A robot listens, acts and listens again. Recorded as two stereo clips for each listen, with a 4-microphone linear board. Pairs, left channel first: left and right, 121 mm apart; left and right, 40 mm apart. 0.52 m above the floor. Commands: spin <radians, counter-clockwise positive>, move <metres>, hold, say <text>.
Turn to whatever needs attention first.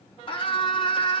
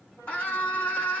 spin 0.79
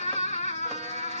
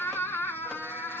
spin 1.48
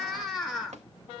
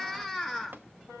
say Found it: a scream, straight ahead, over 4 m away.